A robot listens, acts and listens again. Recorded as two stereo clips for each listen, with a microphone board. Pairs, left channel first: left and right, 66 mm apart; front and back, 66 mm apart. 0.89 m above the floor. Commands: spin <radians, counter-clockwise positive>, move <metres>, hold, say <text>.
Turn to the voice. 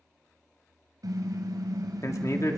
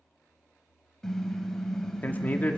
spin 1.05
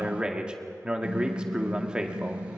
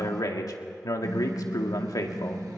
spin -0.26
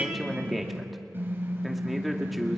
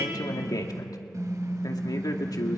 say Found it: a man speaking, straight ahead.